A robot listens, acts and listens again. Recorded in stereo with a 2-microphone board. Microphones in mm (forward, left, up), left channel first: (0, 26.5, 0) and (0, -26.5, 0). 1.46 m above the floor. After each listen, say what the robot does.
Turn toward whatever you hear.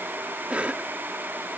Turn 25° right.
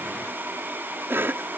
Turn 130° right.
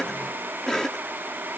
Turn 10° left.
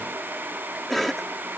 Facing the cough.